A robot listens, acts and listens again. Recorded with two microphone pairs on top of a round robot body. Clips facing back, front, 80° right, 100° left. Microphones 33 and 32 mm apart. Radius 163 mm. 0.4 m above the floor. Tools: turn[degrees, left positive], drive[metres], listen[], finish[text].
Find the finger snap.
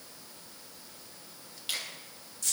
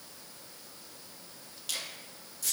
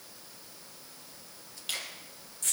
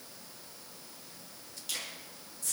Thought: The finger snap: 120° right.
Action: turn[-120]
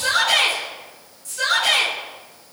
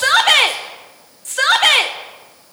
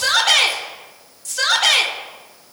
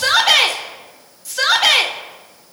Action: listen[]
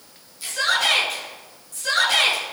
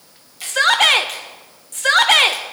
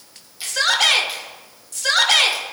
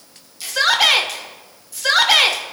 Thought: The finger snap is now 10° right.
Action: turn[-10]
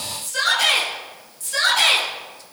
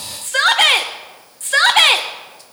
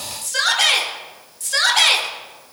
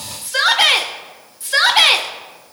Action: listen[]
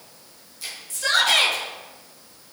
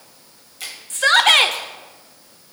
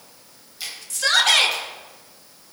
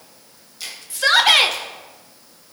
Action: finish[Facing the finger snap, 2 to 4 m away.]